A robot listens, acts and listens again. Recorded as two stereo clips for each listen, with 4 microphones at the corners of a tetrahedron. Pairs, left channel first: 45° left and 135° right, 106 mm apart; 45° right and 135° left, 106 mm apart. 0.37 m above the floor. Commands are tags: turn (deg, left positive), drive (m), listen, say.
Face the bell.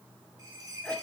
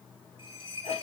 <turn deg="-85"/>
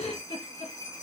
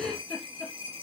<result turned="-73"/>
<turn deg="-15"/>
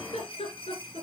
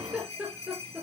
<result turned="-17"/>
<say>Facing the bell.</say>